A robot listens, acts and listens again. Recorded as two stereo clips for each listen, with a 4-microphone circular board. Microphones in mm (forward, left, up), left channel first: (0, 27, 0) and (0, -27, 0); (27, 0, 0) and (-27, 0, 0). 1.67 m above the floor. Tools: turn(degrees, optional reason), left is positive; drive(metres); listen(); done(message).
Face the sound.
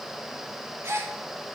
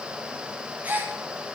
turn(degrees=-120, reason="The gasp: 120° right.")
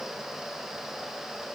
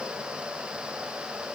done("I heard a gasp from this way, but can't make it out now.")